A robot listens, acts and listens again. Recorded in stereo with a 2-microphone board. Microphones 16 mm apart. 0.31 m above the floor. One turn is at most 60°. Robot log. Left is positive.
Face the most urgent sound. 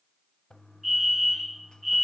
cmd yaw -30
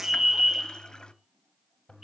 note: So it is at 140° right.
cmd yaw -60
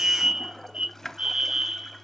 note: The fire alarm is now 85° right.
cmd yaw -60
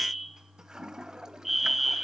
end: Facing the fire alarm, 2 to 4 m away.